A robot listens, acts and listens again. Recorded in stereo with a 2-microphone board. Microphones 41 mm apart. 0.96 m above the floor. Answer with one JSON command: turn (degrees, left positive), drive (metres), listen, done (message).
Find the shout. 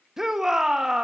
{"turn": -30}
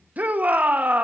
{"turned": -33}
{"turn": -135}
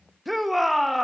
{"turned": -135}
{"done": "Facing the shout, 1 to 2 m away."}